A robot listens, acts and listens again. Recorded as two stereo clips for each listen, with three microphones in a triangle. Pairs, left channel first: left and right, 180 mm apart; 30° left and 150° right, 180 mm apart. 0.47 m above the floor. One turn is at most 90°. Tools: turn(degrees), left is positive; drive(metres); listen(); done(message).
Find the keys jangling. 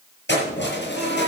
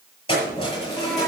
turn(degrees=90)
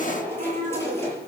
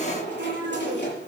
turn(degrees=15)
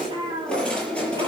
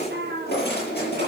turn(degrees=10)
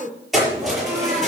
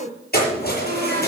done("Facing the keys jangling.")